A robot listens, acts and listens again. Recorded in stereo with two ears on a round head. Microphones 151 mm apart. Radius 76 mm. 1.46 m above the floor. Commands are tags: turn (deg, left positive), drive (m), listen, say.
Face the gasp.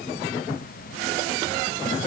<listen/>
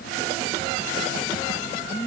<listen/>
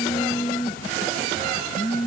<say>I can't make out a gasp, only a phone buzzing.</say>